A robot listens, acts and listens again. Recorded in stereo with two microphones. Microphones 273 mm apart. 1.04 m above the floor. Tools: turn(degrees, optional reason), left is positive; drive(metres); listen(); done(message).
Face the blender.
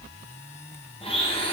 turn(degrees=20, reason="The blender: about 20° left or 160° left.")
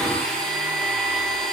done("Facing the blender, 1 to 2 m away.")